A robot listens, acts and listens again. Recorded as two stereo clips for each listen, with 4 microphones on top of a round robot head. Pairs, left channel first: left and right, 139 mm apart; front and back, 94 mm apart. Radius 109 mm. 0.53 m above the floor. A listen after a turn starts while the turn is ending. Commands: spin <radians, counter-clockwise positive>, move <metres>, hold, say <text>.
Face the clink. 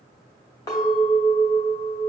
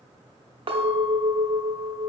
spin 2.71
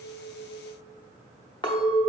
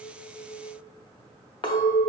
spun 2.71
spin 0.52
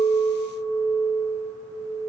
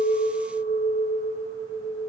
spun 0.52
spin 0.17
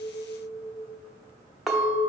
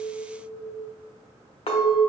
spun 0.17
say Facing the clink, under 1 m away.